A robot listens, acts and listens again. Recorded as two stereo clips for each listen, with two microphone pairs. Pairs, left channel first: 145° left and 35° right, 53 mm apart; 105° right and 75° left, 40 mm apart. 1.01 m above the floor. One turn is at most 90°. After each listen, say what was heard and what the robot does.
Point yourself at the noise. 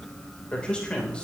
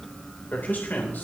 The man speaking: 145° right. Turn 90° right.
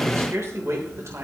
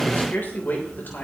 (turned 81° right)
The man speaking is now 65° right. Turn 65° right.
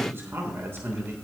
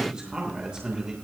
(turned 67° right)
Found it: a man speaking, straight ahead.